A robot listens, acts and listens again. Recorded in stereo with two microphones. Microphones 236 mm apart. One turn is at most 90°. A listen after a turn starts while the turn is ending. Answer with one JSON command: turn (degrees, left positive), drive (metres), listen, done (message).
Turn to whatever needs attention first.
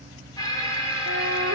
{"turn": 15}
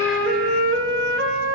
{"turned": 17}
{"listen": true}
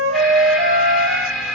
{"done": "Facing the alarm, 2 to 4 m away."}